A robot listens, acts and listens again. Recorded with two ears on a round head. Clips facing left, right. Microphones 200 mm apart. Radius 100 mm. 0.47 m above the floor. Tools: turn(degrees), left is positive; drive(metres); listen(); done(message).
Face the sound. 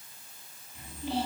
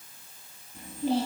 turn(degrees=-35)
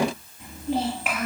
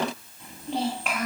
done("Found it: a child speaking, straight ahead.")